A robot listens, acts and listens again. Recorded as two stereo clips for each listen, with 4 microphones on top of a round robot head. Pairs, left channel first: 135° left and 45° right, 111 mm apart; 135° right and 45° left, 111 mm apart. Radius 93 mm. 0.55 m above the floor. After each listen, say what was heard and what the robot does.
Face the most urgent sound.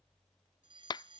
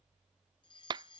The fire alarm: 90° right. Turn 90° right.
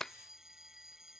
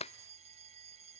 The fire alarm is now 40° left. Turn 40° left.
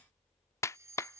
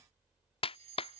The fire alarm is now 20° left. Turn 20° left.
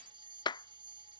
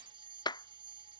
Facing the fire alarm.